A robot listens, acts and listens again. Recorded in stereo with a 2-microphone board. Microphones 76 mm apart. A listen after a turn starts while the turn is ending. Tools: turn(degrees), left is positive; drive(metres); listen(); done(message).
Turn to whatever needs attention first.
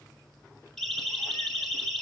turn(degrees=30)
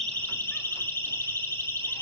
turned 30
turn(degrees=145)
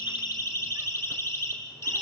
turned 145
turn(degrees=40)
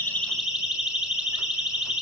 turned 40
turn(degrees=-15)
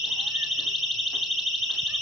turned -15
done("Found it: a siren, straight ahead.")